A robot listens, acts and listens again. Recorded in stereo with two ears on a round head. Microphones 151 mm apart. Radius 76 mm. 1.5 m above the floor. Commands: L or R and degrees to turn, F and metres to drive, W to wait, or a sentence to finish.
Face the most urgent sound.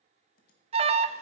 R35
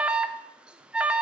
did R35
Found it: an alarm, straight ahead.